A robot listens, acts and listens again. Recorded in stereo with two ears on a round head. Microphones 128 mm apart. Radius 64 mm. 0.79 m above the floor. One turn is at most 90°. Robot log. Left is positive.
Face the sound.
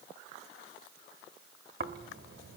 note: The snoring: about 65° right or 115° right.
cmd yaw -65
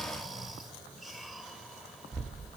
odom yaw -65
end: Found it: snoring, straight ahead.